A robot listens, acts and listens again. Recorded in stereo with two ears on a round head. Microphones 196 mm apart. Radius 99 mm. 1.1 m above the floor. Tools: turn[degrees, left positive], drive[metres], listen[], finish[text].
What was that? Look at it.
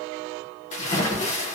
Thought: The splash: about 35° left or 145° left.
Action: turn[35]
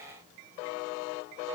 Action: listen[]
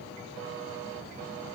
Action: finish[I heard a splash, but can't make it out now. It was about straight ahead or 110° left.]